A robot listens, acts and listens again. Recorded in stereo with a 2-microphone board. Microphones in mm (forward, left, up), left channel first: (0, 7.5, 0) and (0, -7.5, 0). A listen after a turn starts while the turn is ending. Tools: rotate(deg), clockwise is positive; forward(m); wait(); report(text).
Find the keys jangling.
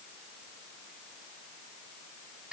wait()
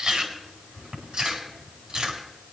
wait()
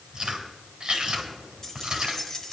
rotate(-35)
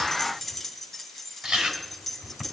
report("Found it: keys jangling, straight ahead.")